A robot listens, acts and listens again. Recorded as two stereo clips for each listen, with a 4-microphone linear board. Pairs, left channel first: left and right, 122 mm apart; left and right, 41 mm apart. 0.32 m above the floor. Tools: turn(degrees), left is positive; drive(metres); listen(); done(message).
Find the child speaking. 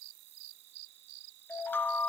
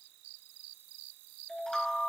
listen()
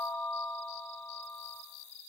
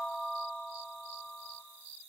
listen()
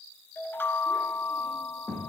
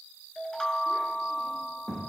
turn(degrees=-30)
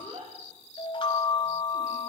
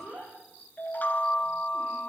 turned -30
turn(degrees=-145)
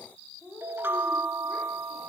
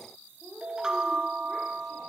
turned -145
turn(degrees=10)
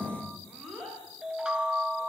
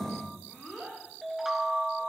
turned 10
done("Facing the child speaking, over 4 m away.")